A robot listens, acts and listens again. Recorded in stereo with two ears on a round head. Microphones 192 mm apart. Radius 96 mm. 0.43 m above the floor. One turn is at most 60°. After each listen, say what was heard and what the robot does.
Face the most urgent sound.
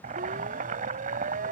The siren: about 45° right or 135° right. Turn 45° right.
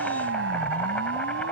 So it is at 85° right. Turn 60° right.
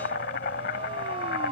The siren is now 30° right. Turn 30° right.
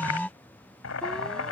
Facing the siren.